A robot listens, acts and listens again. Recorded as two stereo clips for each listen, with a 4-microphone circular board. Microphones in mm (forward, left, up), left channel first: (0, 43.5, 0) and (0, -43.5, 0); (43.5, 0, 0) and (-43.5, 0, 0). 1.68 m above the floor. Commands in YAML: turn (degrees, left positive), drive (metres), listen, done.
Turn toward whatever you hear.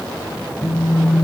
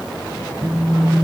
turn: 120
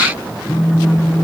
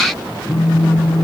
turn: 45
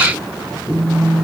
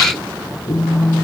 done: "Found it: a phone buzzing, straight ahead."